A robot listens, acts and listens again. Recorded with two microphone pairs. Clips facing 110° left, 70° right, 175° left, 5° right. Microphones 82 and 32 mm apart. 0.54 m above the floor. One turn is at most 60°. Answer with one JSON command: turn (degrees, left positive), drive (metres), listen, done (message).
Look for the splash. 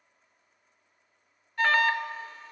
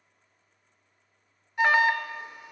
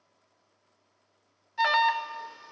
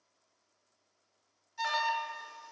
{"listen": true}
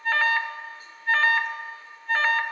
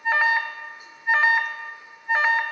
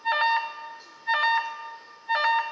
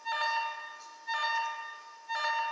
{"listen": true}
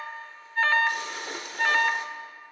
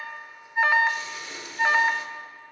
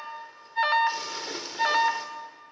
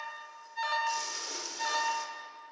{"turn": 60}
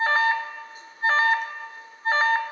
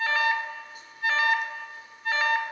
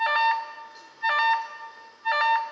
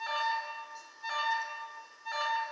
{"turn": 60}
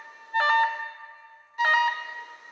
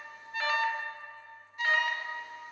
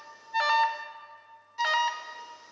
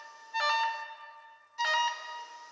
{"turn": 10}
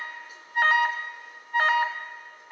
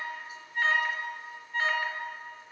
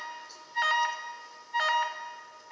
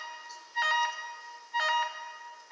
{"done": "I heard a splash from this way, but can't make it out now."}